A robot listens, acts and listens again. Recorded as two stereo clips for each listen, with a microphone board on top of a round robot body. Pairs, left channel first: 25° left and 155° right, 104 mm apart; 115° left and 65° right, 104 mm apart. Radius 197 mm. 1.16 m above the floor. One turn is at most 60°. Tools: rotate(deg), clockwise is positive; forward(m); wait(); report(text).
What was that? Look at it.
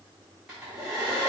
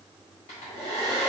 rotate(-60)
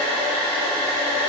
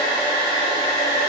rotate(-55)
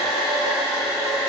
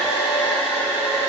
rotate(-20)
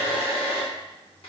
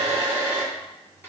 report("Facing the hair dryer, 1 to 2 m away.")